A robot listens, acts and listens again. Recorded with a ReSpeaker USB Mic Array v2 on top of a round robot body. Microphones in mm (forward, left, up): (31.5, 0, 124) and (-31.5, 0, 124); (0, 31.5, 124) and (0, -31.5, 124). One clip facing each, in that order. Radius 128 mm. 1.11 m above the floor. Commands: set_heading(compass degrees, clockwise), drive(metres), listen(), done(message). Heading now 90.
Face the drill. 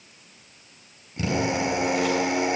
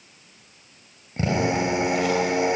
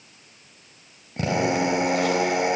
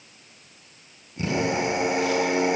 set_heading(325)
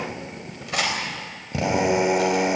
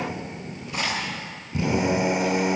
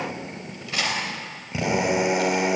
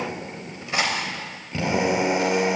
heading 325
set_heading(315)
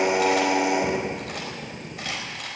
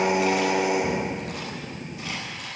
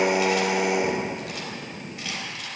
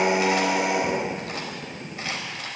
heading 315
done("Facing the drill.")